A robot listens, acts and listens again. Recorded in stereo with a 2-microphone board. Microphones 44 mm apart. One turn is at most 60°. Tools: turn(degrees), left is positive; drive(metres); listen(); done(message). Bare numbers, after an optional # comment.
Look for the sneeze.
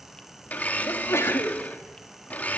turn(60)
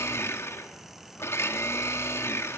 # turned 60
# Nothing new. It was at 30° left.
turn(30)
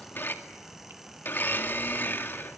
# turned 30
done("Facing where the sneeze came from. I can't hear it now.")